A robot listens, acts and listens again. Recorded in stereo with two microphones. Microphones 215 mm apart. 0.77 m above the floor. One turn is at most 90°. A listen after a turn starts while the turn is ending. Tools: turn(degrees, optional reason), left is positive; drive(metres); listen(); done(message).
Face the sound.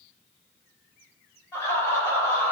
turn(degrees=30)
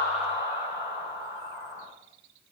turn(degrees=-15, reason="So it is at 15° right.")
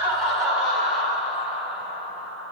done("Facing the laughter, over 4 m away.")